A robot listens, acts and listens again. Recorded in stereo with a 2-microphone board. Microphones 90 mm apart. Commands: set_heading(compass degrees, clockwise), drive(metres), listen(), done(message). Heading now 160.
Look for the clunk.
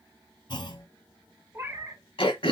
set_heading(105)
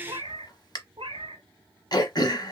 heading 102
listen()
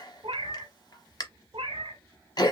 done("I heard a clunk, but can't make it out now. It was about straight ahead or 65° left.")